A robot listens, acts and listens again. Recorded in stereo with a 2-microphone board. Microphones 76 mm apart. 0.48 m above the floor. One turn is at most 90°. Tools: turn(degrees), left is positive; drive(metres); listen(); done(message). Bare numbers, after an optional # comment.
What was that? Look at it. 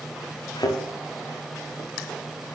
# The thud: about 65° left or 115° left.
turn(65)
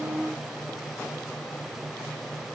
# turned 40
listen()
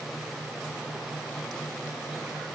done("I heard a thud, but can't make it out now. It was about 25° left or 75° left.")